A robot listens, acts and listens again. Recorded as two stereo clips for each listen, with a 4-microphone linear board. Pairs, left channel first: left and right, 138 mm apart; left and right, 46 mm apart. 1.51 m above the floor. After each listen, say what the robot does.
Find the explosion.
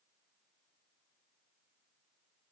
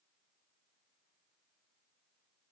Keep listening.
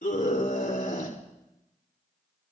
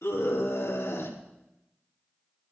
Keep listening.
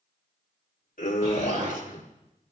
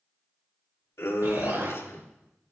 Turn 60° right.
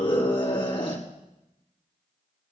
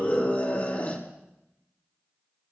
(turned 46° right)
Keep listening.
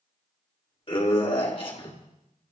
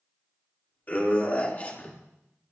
I heard an explosion, but can't make it out now. It was about 15° right or 75° right.